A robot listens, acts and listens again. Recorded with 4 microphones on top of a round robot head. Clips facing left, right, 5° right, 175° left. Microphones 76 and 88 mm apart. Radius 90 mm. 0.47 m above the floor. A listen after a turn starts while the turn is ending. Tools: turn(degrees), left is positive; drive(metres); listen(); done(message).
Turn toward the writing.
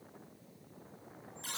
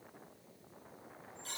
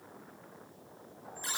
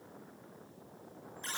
listen()
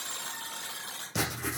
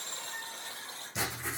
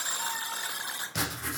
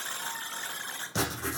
turn(degrees=115)
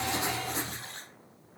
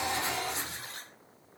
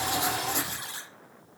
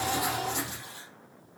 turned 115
turn(degrees=35)
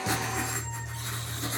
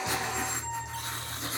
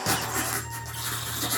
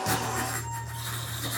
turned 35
done("Facing the writing.")